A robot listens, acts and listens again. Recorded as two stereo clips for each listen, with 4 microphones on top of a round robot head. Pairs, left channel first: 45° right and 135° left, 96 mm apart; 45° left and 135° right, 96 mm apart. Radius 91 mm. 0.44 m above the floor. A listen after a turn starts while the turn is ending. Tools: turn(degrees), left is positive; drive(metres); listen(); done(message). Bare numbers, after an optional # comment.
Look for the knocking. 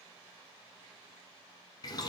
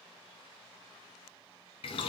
listen()
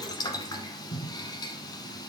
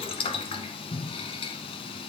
listen()
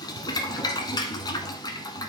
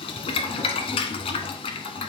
done("I can't make out knocking, only boiling.")